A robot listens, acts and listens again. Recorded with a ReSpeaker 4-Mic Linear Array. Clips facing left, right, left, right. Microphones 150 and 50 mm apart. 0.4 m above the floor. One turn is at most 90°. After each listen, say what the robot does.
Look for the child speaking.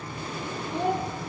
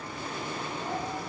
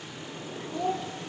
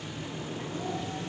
Turn 70° left.
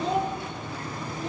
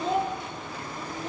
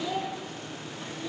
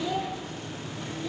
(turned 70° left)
Found it: a child speaking, straight ahead.